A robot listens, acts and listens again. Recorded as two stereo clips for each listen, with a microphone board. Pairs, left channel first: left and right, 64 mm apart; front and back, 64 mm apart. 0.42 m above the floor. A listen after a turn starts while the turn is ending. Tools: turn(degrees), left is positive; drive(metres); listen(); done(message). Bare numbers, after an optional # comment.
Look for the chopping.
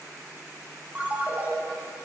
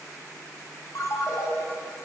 listen()
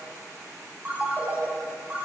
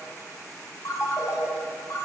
listen()
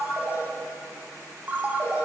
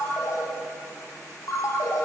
done("I can't make out chopping to turn to.")